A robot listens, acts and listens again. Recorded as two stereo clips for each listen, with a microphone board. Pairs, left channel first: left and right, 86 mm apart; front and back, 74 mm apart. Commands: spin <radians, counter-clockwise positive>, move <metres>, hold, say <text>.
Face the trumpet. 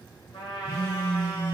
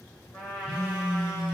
spin 1.22
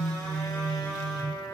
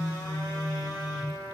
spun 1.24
say Found it: a trumpet, straight ahead.